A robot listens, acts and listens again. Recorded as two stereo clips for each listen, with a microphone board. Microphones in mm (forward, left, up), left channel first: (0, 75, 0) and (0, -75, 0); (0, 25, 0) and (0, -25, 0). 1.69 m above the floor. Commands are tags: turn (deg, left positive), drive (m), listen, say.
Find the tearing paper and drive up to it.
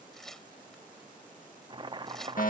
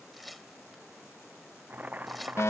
<turn deg="30"/>
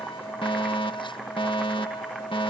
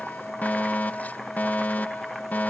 <listen/>
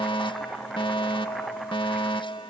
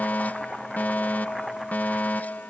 <listen/>
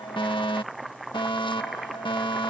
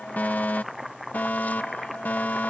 <say>I heard tearing paper, but can't make it out now. It was about 25° right or 145° left. I did not reach it.</say>